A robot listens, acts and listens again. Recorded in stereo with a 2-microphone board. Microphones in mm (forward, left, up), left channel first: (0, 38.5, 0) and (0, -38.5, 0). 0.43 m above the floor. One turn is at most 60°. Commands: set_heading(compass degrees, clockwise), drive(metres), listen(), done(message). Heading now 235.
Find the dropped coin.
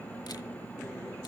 listen()
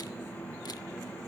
listen()
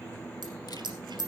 set_heading(295)
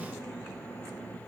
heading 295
set_heading(325)
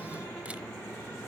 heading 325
done("Facing where the dropped coin came from. I can't hear it now.")